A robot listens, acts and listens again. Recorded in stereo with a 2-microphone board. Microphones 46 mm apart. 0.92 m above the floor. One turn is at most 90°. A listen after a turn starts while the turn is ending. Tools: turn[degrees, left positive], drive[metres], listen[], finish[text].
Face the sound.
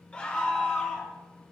Thought: The scream: about 20° left or 160° left.
Action: turn[20]
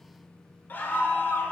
Thought: So it is at 140° left.
Action: turn[90]
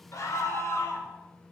Thought: The scream is now 70° left.
Action: turn[70]
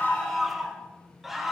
Action: finish[Facing the scream.]